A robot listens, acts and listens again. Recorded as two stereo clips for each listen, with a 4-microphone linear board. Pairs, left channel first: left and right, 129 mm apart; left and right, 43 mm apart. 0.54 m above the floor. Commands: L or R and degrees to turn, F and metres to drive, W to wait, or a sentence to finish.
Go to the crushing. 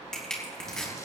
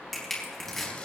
L30
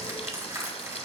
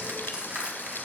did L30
R25
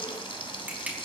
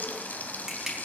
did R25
R10
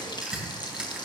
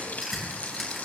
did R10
F1.0
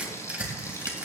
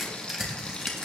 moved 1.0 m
R10
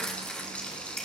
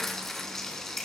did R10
W
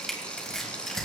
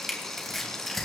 F1.0
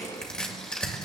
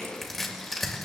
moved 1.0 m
L10
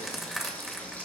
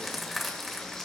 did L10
F1.0
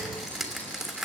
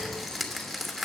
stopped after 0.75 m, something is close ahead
Arrived at the crushing, straight ahead.